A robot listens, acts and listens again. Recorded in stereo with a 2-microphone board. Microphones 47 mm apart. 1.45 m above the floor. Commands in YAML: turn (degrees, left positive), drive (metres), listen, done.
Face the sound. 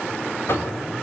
turn: 55
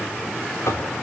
turn: 75
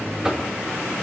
turn: -20
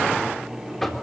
done: "Facing the knocking."